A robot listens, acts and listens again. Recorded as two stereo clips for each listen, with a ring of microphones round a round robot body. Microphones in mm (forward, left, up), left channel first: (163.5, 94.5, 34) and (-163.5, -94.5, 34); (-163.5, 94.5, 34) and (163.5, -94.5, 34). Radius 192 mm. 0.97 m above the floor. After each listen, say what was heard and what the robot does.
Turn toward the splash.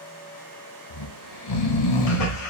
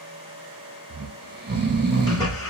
The splash: 70° left. Turn 70° left.
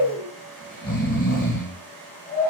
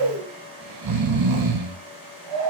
I heard a splash from this way, but can't make it out now.